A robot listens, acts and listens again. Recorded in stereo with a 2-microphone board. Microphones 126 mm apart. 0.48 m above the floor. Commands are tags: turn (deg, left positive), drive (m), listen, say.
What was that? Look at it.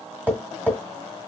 <turn deg="-30"/>
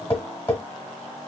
<turn deg="20"/>
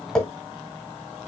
<say>Found it: tapping, straight ahead, 1 to 2 m away.</say>